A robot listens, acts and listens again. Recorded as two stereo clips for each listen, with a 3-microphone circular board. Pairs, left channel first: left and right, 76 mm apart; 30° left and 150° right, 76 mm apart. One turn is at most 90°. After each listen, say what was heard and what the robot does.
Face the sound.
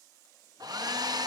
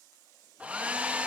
The hair dryer: 80° right. Turn 80° right.
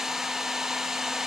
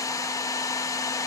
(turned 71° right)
Found it: a hair dryer, straight ahead, under 1 m away.